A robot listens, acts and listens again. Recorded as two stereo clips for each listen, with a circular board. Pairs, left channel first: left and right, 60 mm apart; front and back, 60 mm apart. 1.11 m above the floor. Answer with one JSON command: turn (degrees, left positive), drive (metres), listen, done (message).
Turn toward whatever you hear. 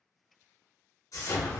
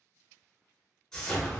{"turn": 80}
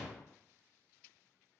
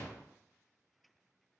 {"done": "Facing the explosion."}